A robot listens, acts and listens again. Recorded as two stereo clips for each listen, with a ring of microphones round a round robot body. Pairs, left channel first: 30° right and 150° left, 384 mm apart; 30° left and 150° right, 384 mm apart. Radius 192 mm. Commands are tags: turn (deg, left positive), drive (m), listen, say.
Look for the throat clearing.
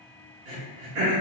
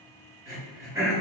<turn deg="130"/>
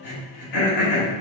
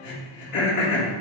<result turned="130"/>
<turn deg="-10"/>
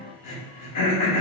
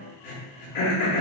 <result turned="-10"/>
<say>Facing the throat clearing, 1 to 2 m away.</say>